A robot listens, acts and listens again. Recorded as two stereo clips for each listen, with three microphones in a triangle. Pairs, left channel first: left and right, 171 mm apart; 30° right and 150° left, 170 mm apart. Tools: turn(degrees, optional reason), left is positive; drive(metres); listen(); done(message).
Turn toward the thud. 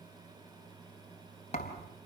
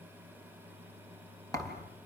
turn(degrees=40, reason="The thud: 40° left.")
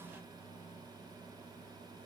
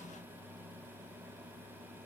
done("Facing where the thud came from. I can't hear it now.")